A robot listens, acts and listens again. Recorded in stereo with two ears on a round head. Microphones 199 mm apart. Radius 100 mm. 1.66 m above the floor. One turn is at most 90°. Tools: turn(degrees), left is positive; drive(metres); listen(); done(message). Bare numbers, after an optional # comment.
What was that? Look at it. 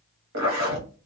# The zipper: about 65° right or 115° right.
turn(-65)
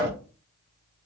# So it is at 15° right.
turn(-15)
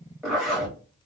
done("Facing the zipper.")